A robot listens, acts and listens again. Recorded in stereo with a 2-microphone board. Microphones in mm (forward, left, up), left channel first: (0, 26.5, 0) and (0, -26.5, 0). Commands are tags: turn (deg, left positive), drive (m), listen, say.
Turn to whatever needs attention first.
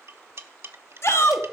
<turn deg="55"/>
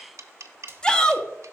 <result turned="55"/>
<turn deg="20"/>
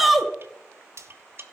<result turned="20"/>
<say>Found it: a shout, straight ahead, 1 to 2 m away.</say>